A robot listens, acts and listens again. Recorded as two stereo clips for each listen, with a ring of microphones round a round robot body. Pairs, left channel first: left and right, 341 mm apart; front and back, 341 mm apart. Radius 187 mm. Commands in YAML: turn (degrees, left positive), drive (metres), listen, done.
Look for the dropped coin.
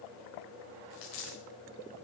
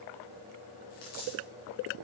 turn: 65
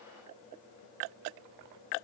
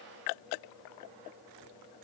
done: "I heard a dropped coin from this way, but can't make it out now."